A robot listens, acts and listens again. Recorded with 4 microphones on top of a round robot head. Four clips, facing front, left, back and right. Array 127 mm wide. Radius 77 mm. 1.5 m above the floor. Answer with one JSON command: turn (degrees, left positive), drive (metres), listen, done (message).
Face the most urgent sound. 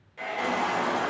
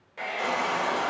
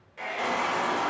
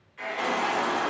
{"turn": -60}
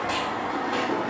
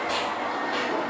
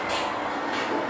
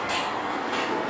{"turn": -10}
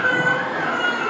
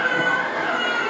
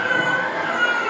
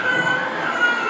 {"done": "Facing the baby crying."}